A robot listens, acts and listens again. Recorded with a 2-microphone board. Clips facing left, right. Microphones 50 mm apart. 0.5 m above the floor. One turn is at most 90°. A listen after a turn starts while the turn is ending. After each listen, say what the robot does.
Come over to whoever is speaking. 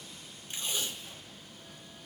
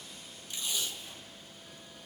Keep listening.
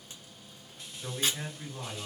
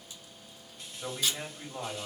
Turn 45° right.
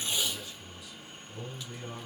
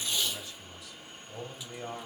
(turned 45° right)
Turn 85° right.
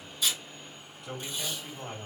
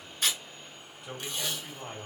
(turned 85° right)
Drive 1.0 m forward.
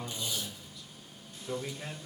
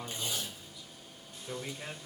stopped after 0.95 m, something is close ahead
Turn 10° right.
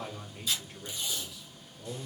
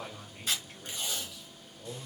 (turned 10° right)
I am next to the man speaking.